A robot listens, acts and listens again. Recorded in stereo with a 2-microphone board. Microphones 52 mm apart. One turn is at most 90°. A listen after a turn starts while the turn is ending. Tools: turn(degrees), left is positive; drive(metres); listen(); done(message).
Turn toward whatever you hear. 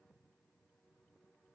listen()
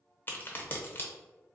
turn(degrees=35)
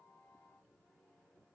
listen()
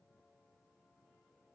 done("I heard a crack, but can't make it out now. It was about straight ahead or 110° left.")